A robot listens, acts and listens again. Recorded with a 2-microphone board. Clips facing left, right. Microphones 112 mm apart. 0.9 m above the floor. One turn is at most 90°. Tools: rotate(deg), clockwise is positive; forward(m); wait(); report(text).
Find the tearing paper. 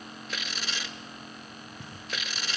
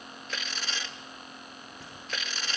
rotate(-30)
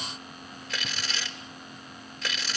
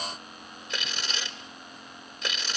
rotate(20)
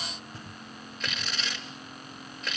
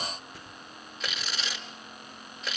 report("Found it: tearing paper, straight ahead, over 4 m away.")